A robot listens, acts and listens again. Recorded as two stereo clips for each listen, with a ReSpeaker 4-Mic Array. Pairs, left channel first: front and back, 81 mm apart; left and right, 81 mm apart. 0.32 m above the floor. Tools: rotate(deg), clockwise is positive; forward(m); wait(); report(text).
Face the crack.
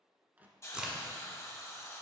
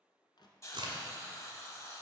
rotate(100)
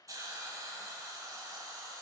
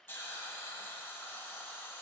report("I heard a crack from this way, but can't make it out now.")